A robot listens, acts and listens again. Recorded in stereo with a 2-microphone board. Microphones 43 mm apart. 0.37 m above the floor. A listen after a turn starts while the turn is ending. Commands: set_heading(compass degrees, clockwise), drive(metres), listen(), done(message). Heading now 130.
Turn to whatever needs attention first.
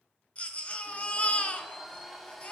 set_heading(100)
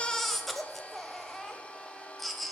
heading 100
done("Found it: a baby crying, straight ahead.")